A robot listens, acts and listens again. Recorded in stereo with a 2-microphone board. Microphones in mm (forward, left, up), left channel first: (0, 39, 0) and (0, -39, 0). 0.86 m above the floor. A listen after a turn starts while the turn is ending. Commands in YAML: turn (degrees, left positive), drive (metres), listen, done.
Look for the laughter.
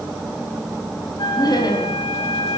turn: 60
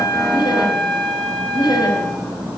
turn: 60
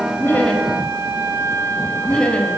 turn: 15
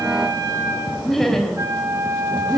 done: "Facing the laughter, over 4 m away."